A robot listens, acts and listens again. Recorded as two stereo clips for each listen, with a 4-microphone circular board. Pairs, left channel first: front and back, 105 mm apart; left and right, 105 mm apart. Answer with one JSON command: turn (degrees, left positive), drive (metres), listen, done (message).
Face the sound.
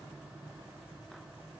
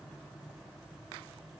{"listen": true}
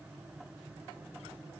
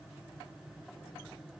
{"listen": true}
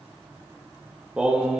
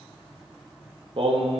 {"turn": -100}
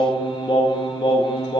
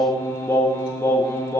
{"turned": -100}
{"turn": 35}
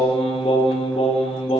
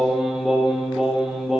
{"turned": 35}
{"done": "Facing the singing."}